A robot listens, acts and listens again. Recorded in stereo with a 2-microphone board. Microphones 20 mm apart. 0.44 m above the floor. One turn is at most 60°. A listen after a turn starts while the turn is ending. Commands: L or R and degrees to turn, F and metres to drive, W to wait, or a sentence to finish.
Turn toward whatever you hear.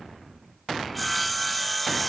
L30
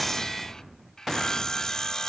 L60
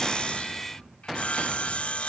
L60
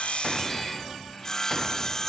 L25
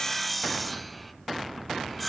Found it: sawing, straight ahead.